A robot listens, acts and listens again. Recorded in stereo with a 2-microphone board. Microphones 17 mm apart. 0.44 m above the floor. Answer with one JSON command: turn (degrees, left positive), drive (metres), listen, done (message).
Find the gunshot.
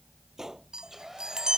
{"turn": -25}
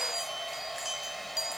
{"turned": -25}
{"listen": true}
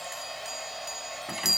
{"done": "I heard a gunshot, but can't make it out now. It was about straight ahead or 130° right."}